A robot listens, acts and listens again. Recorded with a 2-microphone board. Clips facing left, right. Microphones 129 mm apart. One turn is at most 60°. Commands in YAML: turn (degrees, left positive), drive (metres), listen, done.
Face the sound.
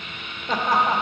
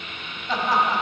turn: 55
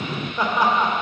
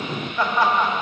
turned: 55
turn: 25
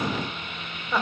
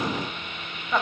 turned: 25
turn: 10
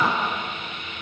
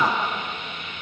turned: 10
done: "Found it: laughter, straight ahead, 1 to 2 m away."